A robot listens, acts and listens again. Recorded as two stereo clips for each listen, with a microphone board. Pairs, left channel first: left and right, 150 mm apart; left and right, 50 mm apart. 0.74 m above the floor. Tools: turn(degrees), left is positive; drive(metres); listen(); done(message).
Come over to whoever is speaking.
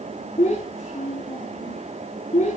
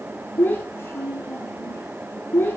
turn(degrees=55)
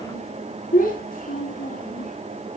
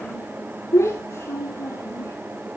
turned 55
turn(degrees=70)
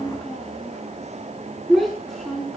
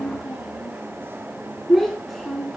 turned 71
drive(metres=1.0)
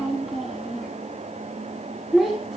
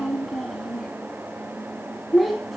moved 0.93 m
drive(metres=1.0)
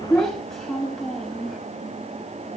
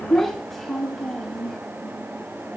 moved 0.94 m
drive(metres=1.0)
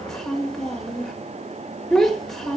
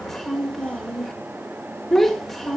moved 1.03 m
drive(metres=1.0)
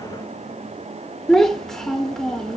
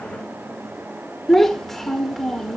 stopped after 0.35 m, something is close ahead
done("Arrived at the child speaking, straight ahead.")